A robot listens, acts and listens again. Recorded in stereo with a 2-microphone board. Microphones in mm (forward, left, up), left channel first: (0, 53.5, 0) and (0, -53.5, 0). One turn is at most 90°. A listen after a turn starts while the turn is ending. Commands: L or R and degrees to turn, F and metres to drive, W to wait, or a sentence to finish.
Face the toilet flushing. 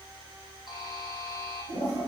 L90
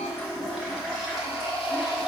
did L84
Facing the toilet flushing.